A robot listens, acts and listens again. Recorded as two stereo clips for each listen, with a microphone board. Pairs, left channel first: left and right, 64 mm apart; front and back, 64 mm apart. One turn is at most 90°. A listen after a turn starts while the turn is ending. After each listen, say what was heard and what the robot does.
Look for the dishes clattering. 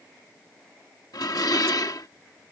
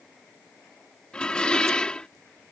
The dishes clattering: 75° left. Turn 75° left.
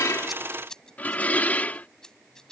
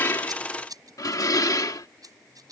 The dishes clattering is now 25° left. Turn 25° left.
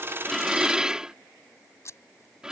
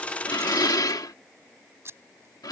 The dishes clattering is now 15° right. Turn 15° right.
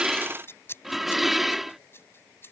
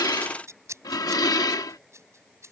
Found it: dishes clattering, straight ahead.